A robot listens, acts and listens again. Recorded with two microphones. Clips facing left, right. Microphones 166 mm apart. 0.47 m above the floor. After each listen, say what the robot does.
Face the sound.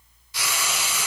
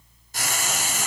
Turn 50° right.
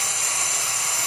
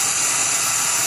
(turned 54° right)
Turn 80° right.
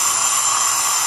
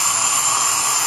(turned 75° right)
Found it: frying, straight ahead, 1 to 2 m away.